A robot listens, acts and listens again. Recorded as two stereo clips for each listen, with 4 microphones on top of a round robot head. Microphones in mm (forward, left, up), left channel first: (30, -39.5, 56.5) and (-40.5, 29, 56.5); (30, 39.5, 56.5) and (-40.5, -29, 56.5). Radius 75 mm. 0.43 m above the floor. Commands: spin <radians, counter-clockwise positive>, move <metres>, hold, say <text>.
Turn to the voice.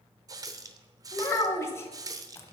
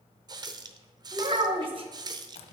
spin -1.83
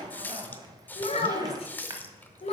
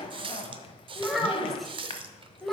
spin -0.79
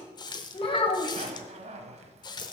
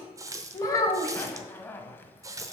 spin -0.26
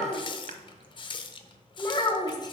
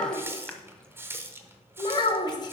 say Facing the child speaking, 1 to 2 m away.